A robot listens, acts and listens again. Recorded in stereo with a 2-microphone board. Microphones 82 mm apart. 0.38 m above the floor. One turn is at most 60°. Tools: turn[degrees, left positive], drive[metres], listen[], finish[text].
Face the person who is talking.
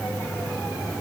Action: listen[]
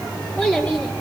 Thought: The child speaking: about 15° left or 165° left.
Action: turn[15]
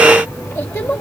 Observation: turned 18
Thought: So it is at 145° left.
Action: turn[60]
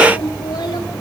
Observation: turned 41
Thought: The child speaking is now 100° left.
Action: turn[60]
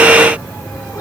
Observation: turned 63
Thought: Nothing new. It was at 40° left.
Action: turn[40]
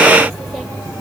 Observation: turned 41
Action: listen[]
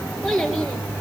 Action: finish[Facing the child speaking, 2 to 4 m away.]